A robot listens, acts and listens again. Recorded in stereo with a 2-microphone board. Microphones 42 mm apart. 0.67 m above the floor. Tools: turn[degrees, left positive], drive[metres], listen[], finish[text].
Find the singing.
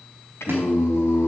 Action: turn[90]
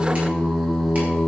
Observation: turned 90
Thought: So it is at 20° right.
Action: turn[-20]
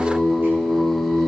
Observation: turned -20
Thought: The singing is now 10° right.
Action: turn[-10]
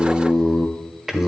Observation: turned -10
Thought: The singing is now 15° right.
Action: turn[-15]
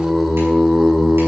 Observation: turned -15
Thought: The singing is now 10° right.
Action: turn[-10]
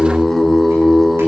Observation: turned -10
Action: finish[Facing the singing, 1 to 2 m away.]